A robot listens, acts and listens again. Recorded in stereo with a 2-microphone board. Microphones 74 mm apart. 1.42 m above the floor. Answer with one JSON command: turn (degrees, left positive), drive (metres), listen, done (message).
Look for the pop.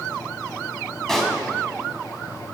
{"turn": 30}
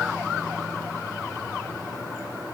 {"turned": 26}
{"listen": true}
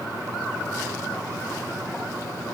{"done": "I heard a pop, but can't make it out now. It was about 20° right or 145° left."}